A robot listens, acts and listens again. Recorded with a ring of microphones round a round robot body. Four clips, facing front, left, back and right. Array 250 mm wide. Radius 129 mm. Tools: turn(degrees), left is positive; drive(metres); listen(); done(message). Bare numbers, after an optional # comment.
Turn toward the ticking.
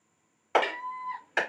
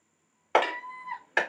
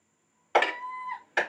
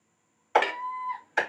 # The ticking: 160° right.
turn(-160)
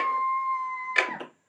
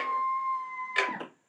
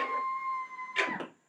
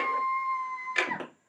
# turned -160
done("Facing the ticking.")